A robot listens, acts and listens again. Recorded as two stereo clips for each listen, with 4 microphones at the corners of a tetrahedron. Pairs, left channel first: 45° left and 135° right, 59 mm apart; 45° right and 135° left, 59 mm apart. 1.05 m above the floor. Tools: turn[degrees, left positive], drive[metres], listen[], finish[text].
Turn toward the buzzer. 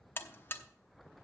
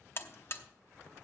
Action: finish[Found it: a buzzer, straight ahead, under 1 m away.]